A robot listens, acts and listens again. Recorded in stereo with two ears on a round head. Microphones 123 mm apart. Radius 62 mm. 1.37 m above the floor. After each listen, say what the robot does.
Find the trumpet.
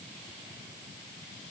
Keep listening.
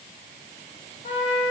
Turn 45° left.
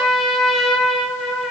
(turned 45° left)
Facing the trumpet.